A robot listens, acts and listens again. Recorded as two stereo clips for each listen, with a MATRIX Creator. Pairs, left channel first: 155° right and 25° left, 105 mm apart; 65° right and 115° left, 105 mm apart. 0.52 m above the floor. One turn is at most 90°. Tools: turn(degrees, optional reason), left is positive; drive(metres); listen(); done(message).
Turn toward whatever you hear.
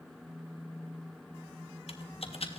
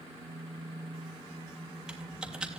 turn(degrees=-90, reason="The typing on a keyboard: 165° right.")
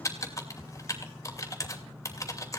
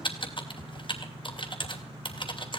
turn(degrees=-90, reason="The typing on a keyboard is now 100° right.")
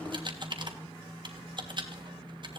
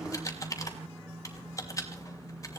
turn(degrees=-10, reason="The typing on a keyboard is now 10° right.")
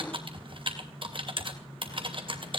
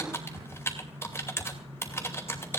done("Found it: typing on a keyboard, straight ahead.")